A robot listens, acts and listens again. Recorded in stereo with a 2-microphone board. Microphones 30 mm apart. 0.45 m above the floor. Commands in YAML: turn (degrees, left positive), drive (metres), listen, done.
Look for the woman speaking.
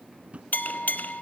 listen: true
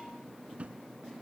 listen: true
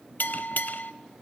done: "I can't make out a woman speaking to turn to."